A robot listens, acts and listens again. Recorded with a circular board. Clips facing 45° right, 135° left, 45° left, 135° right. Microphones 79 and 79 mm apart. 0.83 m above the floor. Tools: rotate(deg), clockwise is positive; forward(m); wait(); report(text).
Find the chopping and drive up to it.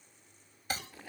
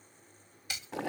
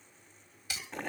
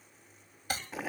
rotate(95)
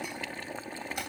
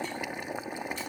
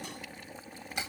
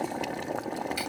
wait()
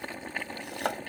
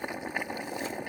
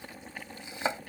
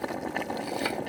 rotate(20)
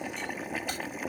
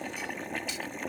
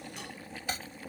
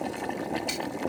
wait()
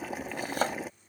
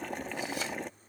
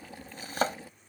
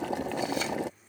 forward(1.0)
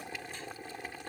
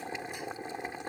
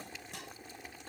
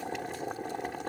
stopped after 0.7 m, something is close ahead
wait()
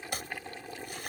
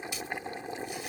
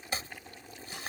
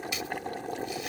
rotate(10)
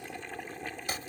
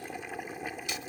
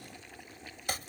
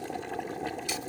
report("Blocked. The chopping is further on, straight ahead.")